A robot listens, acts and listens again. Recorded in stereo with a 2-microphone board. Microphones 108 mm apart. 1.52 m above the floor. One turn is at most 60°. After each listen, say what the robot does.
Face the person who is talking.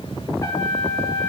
Keep listening.
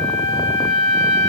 Keep listening.
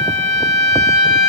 I can't make out anyone speaking to turn to.